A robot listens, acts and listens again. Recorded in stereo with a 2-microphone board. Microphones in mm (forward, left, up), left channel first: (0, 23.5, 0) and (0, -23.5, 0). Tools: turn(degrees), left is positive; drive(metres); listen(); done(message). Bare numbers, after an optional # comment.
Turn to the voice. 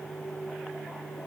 listen()
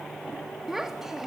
turn(-30)
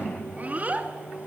# So it is at 140° right.
turn(-140)
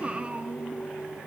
# The child speaking is now 30° right.
turn(-30)
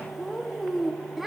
done("Facing the child speaking.")